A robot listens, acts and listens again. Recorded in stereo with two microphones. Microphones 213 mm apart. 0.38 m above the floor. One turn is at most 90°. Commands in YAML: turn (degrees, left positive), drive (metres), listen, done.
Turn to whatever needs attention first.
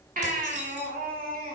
turn: -40
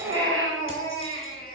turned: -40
turn: -90
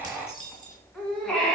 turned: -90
done: "Facing the baby crying."